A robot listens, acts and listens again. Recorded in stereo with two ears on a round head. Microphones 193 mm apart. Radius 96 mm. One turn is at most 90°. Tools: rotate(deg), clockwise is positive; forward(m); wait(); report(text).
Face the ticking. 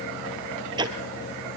rotate(20)
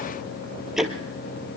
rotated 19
report("Facing the ticking, 1 to 2 m away.")